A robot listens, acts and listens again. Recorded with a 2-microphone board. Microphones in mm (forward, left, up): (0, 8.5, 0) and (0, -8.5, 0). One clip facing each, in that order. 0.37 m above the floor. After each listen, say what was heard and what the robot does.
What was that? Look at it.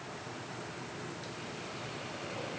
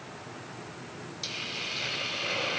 Turn 90° right.
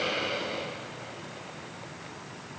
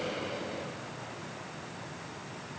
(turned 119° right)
So it is at 45° left. Turn 45° left.
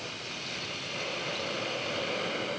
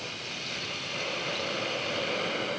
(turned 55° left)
The hiss is now 10° right. Turn 10° right.
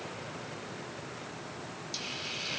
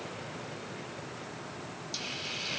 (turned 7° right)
Facing the hiss.